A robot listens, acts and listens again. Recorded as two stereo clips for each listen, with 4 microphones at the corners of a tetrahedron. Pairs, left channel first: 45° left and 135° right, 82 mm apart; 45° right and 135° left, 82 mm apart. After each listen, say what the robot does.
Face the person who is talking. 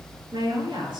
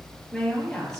Turn 125° right.
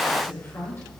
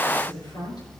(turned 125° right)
Turn 15° right.
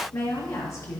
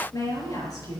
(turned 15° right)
Found it: a woman speaking, straight ahead.